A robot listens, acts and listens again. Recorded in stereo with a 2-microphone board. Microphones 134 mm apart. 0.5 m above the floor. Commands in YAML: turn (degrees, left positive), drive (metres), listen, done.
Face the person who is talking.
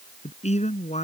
turn: 55
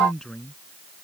done: "Found it: a man speaking, straight ahead."